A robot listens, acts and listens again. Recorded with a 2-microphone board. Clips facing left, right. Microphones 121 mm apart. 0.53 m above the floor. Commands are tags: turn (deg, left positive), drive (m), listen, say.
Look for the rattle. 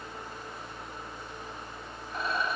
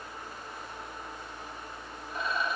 <turn deg="90"/>
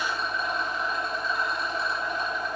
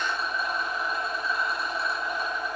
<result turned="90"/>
<turn deg="-10"/>
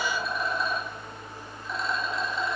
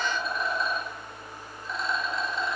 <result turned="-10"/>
<say>Found it: a rattle, straight ahead.</say>